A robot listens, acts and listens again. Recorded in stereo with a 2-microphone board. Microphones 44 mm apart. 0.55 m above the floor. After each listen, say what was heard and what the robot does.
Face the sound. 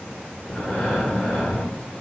The breathing: about 25° left or 155° left. Turn 25° left.
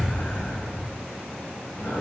So it is at 130° left. Turn 130° left.
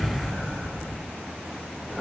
Found it: breathing, straight ahead.